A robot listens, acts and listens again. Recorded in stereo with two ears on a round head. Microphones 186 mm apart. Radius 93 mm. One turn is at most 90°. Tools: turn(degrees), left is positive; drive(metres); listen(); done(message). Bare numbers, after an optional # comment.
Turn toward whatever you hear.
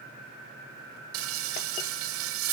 # The frying: about 75° right or 105° right.
turn(-75)
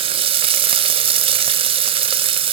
# So it is at 25° right.
turn(-25)
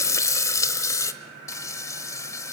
# The frying is now 15° left.
turn(15)
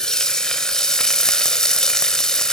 done("Found it: frying, straight ahead, 1 to 2 m away.")